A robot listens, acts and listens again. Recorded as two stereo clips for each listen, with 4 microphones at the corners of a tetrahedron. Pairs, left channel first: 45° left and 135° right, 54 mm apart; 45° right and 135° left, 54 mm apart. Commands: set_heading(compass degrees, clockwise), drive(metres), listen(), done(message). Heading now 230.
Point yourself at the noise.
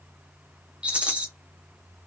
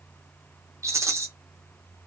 set_heading(70)
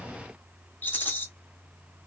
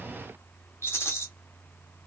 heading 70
done("Facing the rattle.")